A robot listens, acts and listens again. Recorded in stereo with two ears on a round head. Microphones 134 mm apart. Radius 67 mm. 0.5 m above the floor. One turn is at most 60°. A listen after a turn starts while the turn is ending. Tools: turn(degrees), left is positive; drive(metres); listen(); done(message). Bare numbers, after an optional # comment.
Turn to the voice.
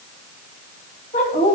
# The woman speaking: about 50° left or 130° left.
turn(50)
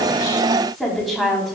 done("Found it: a woman speaking, straight ahead.")